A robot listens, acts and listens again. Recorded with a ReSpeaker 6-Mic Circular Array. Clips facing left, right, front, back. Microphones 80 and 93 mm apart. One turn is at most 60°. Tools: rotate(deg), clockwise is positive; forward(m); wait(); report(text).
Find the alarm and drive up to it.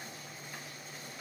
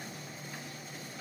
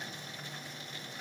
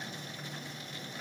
wait()
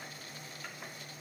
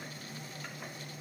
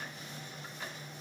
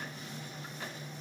wait()
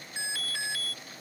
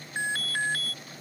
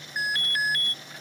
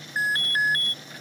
rotate(60)
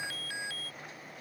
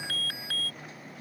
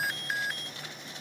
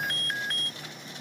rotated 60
rotate(60)
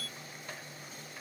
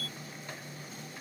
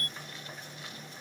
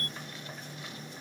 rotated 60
rotate(50)
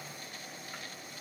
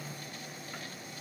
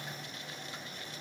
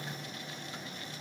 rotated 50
wait()
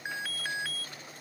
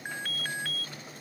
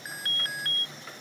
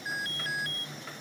forward(1.0)
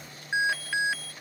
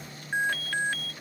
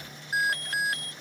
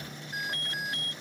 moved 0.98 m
rotate(-10)
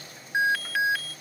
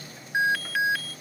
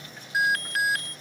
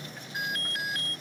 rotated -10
forward(1.0)
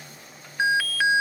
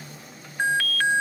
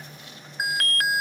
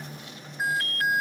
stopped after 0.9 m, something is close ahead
report("Arrived at the alarm, straight ahead.")